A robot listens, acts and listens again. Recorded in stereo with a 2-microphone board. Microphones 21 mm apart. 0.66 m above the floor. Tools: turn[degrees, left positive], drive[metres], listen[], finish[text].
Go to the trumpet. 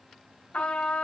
Action: turn[90]
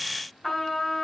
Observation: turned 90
Action: drive[1.0]
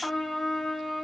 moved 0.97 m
Action: drive[1.0]
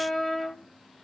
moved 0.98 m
Action: drive[1.0]
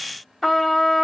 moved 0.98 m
Thought: The trumpet is now 10° left.
Action: turn[10]
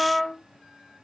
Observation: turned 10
Action: drive[1.0]
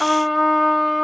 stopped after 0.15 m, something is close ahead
Action: finish[Arrived at the trumpet, straight ahead.]